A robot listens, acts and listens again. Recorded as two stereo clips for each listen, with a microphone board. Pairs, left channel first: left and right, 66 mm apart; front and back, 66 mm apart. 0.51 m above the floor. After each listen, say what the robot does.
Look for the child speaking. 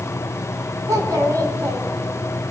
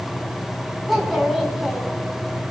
Turn 90° right.
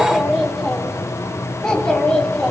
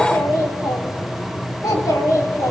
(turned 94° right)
Turn 15° left.
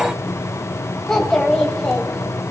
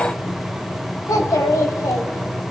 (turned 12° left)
Turn 15° left.
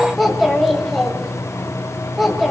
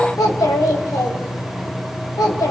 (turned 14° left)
Facing the child speaking.